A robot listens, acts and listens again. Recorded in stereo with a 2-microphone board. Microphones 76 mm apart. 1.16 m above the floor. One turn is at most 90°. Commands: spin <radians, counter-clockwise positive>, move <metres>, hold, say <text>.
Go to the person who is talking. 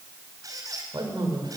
spin -1.22
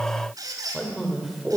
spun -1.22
move 1.0
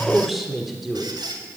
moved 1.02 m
move 1.0
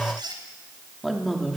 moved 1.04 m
move 1.0
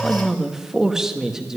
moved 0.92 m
spin -0.17
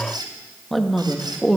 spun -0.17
move 1.0
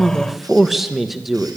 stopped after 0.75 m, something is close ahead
say I am next to the man speaking.